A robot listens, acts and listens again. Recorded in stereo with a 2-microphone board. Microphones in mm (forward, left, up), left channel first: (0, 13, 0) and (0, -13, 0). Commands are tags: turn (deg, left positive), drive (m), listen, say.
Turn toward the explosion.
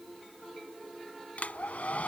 <listen/>
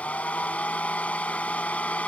<listen/>
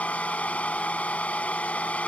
<say>I can't make out an explosion, only a hair dryer.</say>